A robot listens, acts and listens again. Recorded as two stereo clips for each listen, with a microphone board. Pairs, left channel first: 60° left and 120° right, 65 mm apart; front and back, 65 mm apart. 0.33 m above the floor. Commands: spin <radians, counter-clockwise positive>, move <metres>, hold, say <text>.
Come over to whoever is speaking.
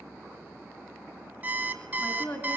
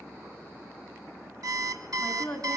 spin 1.31
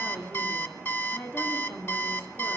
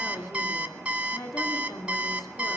move 1.0
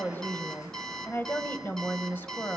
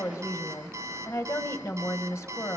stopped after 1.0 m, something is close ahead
spin 0.26
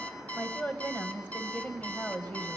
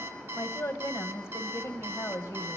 say Arrived at the woman speaking, straight ahead.